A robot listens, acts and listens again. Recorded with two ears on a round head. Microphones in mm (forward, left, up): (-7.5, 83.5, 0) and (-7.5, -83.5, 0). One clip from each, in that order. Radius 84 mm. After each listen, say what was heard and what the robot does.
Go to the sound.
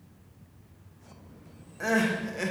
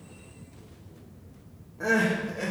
The crying: about 70° left or 110° left. Turn 70° left.
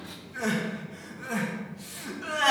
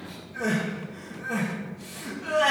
So it is at 35° left. Turn 35° left.
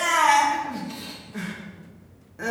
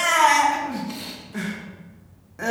The crying is now 15° right. Turn 15° right.
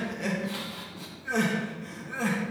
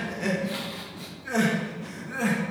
Drive 1.0 m forward.
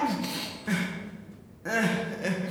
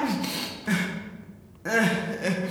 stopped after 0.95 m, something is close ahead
Arrived at the crying, straight ahead.